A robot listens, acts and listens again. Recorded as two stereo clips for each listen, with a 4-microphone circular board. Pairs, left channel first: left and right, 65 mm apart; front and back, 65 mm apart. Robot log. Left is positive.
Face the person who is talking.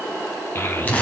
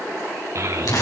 note: The child speaking: 140° left.
cmd yaw +140
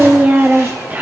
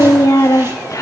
note: The child speaking is now 25° right.
cmd yaw -25
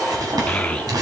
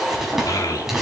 note: The child speaking is now 20° left.
cmd yaw +20
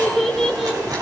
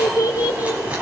end: Facing the child speaking.